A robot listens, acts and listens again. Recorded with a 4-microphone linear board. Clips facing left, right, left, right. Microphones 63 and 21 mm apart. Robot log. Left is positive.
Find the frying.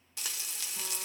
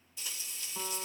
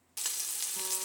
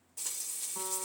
note: The frying: about 75° left or 105° left.
cmd yaw +75
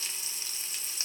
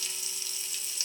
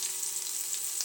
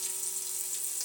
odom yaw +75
note: So it is at 35° left.
cmd yaw +35
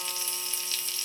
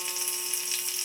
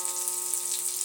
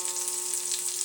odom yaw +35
note: The frying is now 20° right.
cmd yaw -20
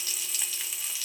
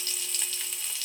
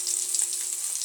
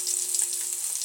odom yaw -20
end: Found it: frying, straight ahead, under 1 m away.